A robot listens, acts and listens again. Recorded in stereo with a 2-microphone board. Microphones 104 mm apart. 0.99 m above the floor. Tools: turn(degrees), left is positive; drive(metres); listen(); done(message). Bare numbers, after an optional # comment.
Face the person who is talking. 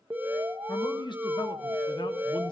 # The man speaking: about 50° left or 130° left.
turn(50)
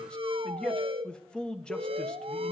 # So it is at 10° left.
turn(10)
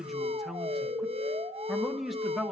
done("Found it: a man speaking, straight ahead, 1 to 2 m away.")